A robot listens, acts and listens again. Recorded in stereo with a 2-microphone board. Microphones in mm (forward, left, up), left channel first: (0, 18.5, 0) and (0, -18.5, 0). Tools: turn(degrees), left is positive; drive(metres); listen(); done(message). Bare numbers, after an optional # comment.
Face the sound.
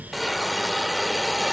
turn(30)
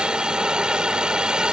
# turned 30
# So it is at 30° right.
turn(-30)
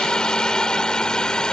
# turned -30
# The hiss is now 25° left.
turn(25)
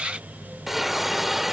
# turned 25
done("Found it: a hiss, straight ahead.")